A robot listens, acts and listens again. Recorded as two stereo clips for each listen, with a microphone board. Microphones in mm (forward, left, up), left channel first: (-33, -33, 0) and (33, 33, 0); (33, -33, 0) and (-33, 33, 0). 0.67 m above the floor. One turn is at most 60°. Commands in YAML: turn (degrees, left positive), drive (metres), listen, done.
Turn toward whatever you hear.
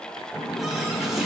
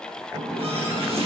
turn: 60
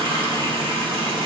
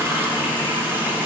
turn: 60
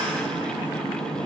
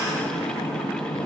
turn: 10
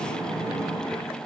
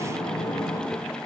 done: "Found it: a running tap, straight ahead."